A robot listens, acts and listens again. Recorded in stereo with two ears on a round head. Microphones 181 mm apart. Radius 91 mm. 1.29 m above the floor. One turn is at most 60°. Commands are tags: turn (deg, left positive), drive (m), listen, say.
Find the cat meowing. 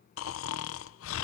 <listen/>
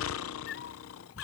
<turn deg="60"/>
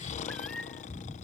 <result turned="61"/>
<say>Found it: a cat meowing, straight ahead.</say>